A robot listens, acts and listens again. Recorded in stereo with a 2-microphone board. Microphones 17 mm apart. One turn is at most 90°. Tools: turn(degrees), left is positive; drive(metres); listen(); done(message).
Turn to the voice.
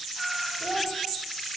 turn(degrees=-20)
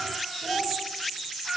turn(degrees=10)
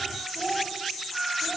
done("Facing the child speaking, over 4 m away.")